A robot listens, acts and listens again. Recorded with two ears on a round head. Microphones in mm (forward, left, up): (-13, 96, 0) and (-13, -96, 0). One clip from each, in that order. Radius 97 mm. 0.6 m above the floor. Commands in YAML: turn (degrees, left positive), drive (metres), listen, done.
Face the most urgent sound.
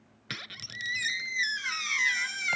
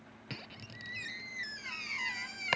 listen: true
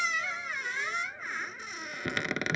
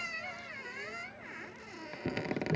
listen: true
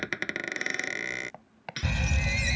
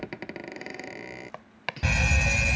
turn: -35
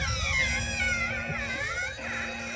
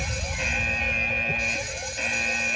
turn: -105
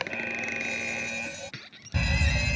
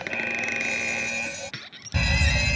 turn: -15
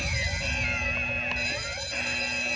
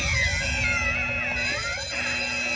done: "Facing the fire alarm."